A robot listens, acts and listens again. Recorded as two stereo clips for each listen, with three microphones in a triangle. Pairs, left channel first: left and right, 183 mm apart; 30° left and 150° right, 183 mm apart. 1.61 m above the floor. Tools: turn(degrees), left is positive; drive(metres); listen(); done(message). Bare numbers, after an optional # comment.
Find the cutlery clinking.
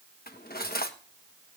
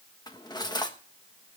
# The cutlery clinking: 90° left.
turn(90)
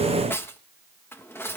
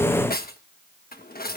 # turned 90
# The cutlery clinking is now 15° left.
turn(15)
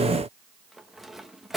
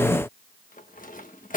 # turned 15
done("Facing the cutlery clinking.")